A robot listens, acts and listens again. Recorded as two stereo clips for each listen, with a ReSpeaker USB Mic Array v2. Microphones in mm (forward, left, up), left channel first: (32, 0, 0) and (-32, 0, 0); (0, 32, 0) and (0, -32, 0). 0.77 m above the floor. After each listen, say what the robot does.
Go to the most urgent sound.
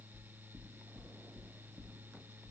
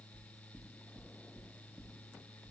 Keep listening.
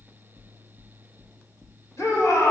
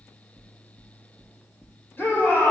Turn 35° left.
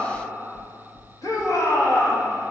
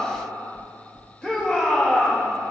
Turn 15° left.
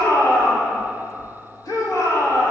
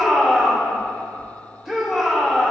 Drive 1.0 m forward.
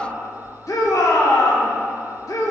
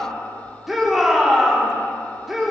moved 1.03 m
Drive 1.0 m forward.
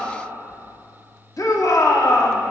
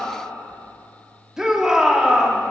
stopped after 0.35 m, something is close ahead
Turn 10° right.
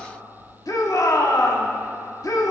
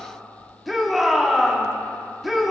I am next to the shout.